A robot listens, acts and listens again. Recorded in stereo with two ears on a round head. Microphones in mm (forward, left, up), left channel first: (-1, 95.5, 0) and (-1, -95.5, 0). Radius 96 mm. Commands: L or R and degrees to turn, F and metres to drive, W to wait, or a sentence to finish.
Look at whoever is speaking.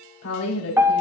L90
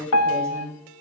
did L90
R15
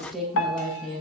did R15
Found it: a woman speaking, straight ahead, over 4 m away.